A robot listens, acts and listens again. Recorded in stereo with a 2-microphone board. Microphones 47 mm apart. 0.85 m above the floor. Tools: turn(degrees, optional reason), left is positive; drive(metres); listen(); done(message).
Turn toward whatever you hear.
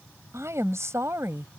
turn(degrees=-90)
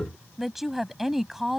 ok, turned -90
done("Found it: a woman speaking, straight ahead.")